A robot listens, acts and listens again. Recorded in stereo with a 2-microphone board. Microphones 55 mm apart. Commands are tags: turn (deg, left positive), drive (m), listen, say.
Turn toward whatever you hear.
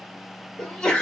<turn deg="30"/>
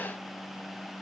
<listen/>
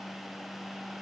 <say>I heard a sneeze, but can't make it out now. It was about 15° right or 135° left.</say>